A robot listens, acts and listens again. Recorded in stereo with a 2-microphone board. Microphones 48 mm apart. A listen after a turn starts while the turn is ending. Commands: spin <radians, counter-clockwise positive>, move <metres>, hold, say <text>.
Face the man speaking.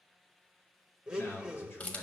spin 0.87
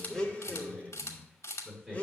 say Facing the man speaking.